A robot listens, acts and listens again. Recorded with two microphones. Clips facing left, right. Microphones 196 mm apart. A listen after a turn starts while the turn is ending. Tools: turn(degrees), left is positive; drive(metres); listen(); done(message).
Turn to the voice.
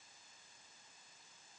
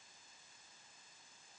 listen()
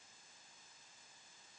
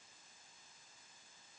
listen()
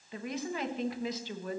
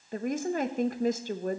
turn(degrees=-45)
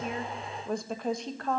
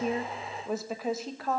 done("Found it: a woman speaking, straight ahead, 1 to 2 m away.")